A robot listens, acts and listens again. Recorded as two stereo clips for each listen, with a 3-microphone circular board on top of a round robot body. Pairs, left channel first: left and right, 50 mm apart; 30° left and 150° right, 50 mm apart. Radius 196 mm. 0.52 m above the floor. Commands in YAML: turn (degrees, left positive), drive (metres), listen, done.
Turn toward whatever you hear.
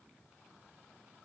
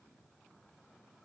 listen: true
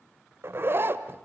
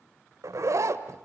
turn: -135
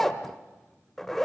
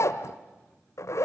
done: "Facing the zipper, 1 to 2 m away."